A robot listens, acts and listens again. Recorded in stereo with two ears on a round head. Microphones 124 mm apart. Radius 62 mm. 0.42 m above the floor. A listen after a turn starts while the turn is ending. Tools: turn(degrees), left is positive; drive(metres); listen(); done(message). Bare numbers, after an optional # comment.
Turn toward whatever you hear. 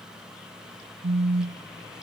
# The phone buzzing: about 75° right or 105° right.
turn(-75)
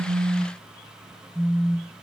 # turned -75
done("Facing the phone buzzing.")